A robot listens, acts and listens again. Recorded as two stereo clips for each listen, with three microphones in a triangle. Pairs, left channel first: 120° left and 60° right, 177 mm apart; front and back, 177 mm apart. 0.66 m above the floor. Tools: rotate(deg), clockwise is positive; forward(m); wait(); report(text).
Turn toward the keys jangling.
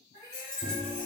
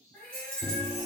rotate(165)
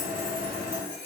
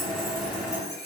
rotate(55)
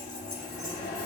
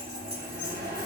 wait()
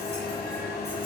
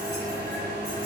wait()
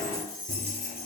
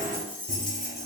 rotate(40)
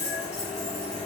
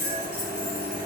report("Found it: keys jangling, straight ahead.")